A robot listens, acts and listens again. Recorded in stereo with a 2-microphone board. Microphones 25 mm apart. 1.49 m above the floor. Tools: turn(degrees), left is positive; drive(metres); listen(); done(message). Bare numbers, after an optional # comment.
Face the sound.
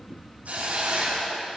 turn(-90)
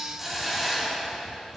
# So it is at 10° right.
turn(-10)
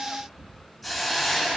done("Facing the hiss.")